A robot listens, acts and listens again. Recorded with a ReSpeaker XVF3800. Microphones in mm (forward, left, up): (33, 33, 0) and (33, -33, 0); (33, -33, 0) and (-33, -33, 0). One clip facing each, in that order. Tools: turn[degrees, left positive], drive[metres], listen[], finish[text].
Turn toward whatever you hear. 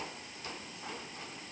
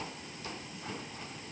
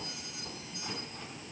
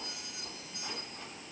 Action: listen[]
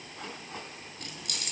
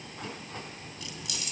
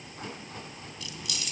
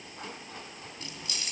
Thought: The keys jangling: 120° left.
Action: turn[120]
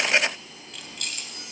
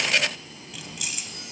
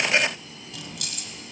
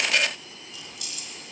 Thought: The keys jangling is now 10° right.
Action: turn[-10]
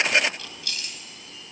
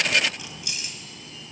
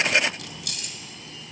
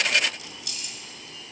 Thought: The keys jangling is now 20° right.
Action: turn[-20]
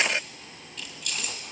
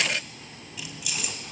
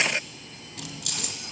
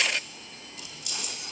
Action: finish[Found it: keys jangling, straight ahead.]